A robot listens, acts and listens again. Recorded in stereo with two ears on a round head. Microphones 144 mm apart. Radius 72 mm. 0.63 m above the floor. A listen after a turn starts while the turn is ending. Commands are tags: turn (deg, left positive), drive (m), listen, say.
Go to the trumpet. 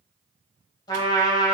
<turn deg="25"/>
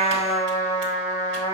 <turn deg="130"/>
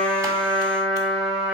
<drive m="1.0"/>
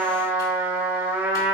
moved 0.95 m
<turn deg="-15"/>
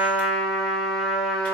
<drive m="1.0"/>
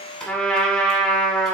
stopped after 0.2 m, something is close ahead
<say>Arrived at the trumpet, straight ahead.</say>